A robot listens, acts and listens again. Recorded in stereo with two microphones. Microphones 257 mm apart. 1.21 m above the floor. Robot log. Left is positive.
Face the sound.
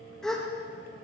cmd yaw +30
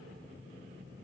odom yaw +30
cmd idle
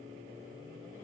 end: I heard a gasp, but can't make it out now. It was about 30° right or 150° left.